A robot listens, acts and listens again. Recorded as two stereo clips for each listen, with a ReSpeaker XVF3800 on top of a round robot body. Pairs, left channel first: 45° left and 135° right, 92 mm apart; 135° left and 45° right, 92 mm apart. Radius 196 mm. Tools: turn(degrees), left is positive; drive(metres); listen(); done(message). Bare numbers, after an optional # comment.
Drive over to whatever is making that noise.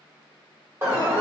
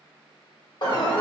# The alarm: 165° left.
turn(165)
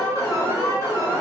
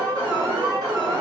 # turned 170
drive(1.0)
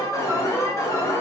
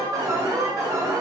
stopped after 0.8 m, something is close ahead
done("Arrived at the alarm, straight ahead.")